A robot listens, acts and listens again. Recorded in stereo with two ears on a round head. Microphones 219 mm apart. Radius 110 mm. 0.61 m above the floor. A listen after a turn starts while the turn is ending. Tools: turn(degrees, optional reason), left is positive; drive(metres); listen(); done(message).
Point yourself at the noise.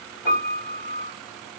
turn(degrees=45, reason="The piano: about 45° left or 135° left.")
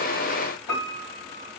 turn(degrees=90, reason="So it is at 90° left.")
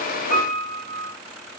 turn(degrees=25, reason="The piano is now 25° left.")
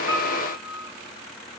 turn(degrees=-15, reason="The piano is now 15° right.")
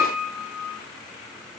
done("Facing the piano.")